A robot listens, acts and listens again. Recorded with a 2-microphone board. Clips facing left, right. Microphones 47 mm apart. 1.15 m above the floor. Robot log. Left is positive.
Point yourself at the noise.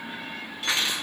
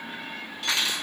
note: The cutlery clinking: about 20° left or 160° left.
cmd yaw +20
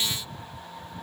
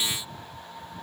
cmd idle
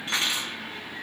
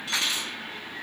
note: So it is at 140° left.
cmd yaw +140
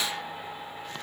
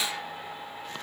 cmd idle
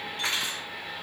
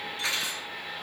note: The cutlery clinking is now 50° left.
cmd yaw +50
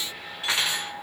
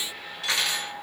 note: The cutlery clinking is now 25° left.
cmd yaw +25
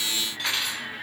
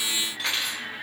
end: Facing the cutlery clinking.